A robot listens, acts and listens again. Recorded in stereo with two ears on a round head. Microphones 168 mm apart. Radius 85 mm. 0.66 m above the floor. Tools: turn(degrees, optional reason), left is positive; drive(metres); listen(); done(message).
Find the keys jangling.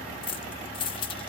turn(degrees=30, reason="The keys jangling: about 30° left or 150° left.")
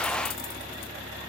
listen()
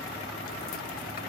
listen()
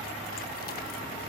done("I heard keys jangling, but can't make it out now. It was about straight ahead or 120° left.")